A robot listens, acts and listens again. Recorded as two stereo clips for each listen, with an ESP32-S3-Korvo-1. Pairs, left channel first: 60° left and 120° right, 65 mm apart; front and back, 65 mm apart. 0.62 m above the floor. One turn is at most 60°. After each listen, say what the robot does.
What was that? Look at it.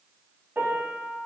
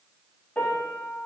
Turn 60° right.
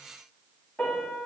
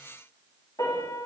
Turn 10° right.
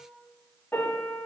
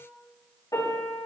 Facing the piano, over 4 m away.